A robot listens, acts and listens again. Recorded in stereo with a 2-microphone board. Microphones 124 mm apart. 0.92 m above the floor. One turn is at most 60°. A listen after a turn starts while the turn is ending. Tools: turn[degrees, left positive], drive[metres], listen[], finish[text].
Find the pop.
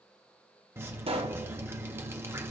Thought: The pop: about 50° right or 130° right.
Action: turn[-50]
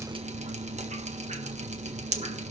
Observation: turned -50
Action: listen[]
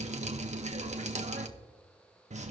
Action: finish[I heard a pop, but can't make it out now. It was about straight ahead or 80° right.]